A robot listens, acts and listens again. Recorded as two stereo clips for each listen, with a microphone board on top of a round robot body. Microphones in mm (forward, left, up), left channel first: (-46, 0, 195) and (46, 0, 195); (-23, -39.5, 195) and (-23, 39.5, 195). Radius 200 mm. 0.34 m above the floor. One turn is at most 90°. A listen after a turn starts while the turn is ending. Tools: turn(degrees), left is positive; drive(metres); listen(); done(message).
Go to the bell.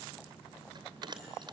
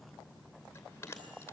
turn(degrees=-30)
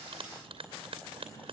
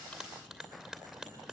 turn(degrees=10)
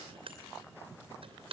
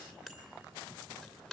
drive(metres=1.0)
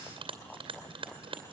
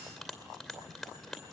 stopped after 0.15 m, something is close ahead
done("Blocked. The bell is further on, straight ahead.")